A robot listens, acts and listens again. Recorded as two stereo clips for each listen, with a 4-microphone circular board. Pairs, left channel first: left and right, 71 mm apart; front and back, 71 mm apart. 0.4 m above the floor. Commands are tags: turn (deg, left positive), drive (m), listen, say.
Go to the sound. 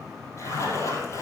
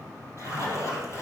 <turn deg="135"/>
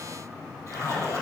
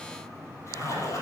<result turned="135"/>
<turn deg="45"/>
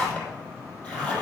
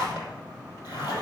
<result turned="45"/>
<turn deg="20"/>
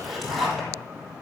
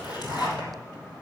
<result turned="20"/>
<drive m="1.0"/>
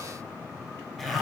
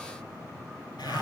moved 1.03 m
<drive m="1.0"/>
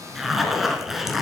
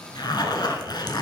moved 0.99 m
<drive m="1.0"/>
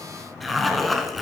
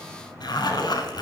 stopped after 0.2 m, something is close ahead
<say>I am next to the zipper.</say>